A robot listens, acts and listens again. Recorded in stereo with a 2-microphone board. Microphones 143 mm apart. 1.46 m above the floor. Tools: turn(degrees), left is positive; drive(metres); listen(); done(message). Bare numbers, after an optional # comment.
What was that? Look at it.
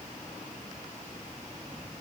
listen()
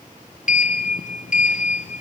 # The sliding door: about 65° left or 115° left.
turn(65)
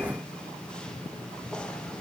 done("Facing the sliding door, under 1 m away.")